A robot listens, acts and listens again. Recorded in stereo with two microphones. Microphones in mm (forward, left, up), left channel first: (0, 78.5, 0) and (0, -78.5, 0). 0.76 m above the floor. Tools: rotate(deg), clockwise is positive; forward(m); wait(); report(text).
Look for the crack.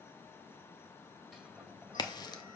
rotate(-25)
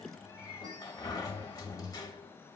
wait()
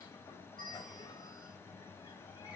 report("I heard a crack, but can't make it out now. It was about straight ahead or 130° left.")